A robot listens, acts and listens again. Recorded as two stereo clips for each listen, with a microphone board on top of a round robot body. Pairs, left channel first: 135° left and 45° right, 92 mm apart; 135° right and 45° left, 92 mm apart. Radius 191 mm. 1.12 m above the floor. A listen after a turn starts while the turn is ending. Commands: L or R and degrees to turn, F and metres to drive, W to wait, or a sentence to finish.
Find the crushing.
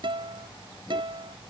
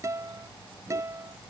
W
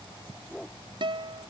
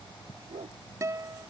W
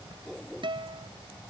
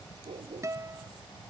I can't make out crushing to turn to.